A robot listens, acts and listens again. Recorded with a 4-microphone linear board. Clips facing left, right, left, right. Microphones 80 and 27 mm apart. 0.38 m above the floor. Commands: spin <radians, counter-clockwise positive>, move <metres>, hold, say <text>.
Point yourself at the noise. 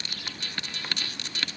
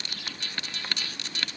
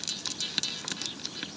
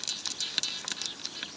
hold
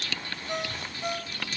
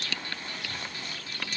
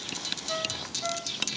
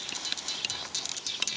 hold
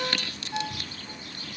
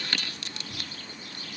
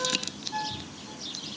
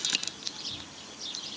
spin 1.31
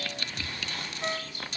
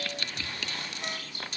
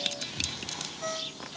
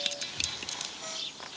spin 0.52
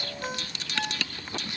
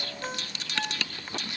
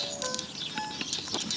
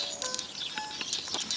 say Found it: a ringtone, straight ahead.